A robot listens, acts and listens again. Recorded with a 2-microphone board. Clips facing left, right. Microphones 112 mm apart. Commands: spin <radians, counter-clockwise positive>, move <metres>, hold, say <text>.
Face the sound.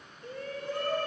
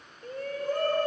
spin -0.79
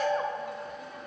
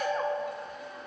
say Facing the shout.